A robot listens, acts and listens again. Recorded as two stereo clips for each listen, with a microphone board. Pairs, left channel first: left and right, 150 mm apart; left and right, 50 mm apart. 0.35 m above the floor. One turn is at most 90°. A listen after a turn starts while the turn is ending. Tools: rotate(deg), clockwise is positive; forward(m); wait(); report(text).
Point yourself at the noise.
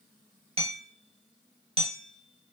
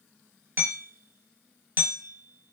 rotate(45)
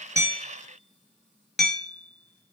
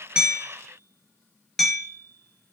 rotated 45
report("Found it: hammering, straight ahead.")